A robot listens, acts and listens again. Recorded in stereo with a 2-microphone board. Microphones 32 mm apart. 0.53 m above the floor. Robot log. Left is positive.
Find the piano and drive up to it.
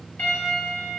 note: The piano: about 65° left or 115° left.
cmd yaw +65
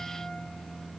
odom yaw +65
cmd idle
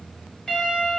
note: So it is at 30° left.
cmd yaw +30
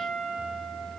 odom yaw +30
cmd fwd 1.0
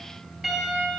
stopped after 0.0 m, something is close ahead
note: The piano is now 10° right.
cmd yaw -10
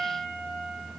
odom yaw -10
end: Blocked. The piano is further on, straight ahead.